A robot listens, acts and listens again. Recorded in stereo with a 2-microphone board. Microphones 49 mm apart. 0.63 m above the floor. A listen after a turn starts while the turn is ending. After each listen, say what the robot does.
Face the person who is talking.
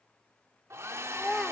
Turn 30° left.
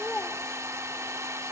Keep listening.
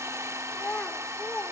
Turn 145° left.
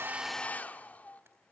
Keep listening.
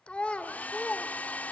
Turn 25° left.
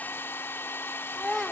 Facing the child speaking.